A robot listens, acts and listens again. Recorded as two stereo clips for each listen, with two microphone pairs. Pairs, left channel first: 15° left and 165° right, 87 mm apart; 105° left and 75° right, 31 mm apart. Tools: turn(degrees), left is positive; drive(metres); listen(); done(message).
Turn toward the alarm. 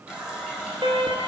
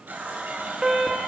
turn(degrees=-145)
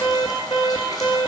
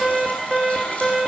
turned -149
done("Found it: an alarm, straight ahead, 1 to 2 m away.")